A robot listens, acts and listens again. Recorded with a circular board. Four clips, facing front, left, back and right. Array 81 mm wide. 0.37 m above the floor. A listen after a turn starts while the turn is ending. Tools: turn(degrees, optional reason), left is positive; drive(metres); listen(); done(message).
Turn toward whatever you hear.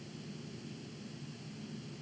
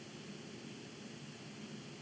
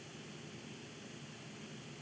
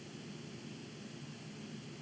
listen()
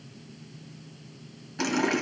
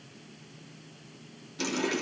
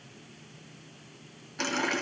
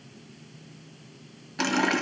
turn(degrees=-90, reason="The running tap: 90° right.")
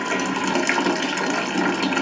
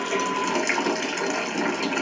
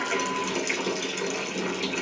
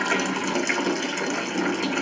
done("Facing the running tap, 1 to 2 m away.")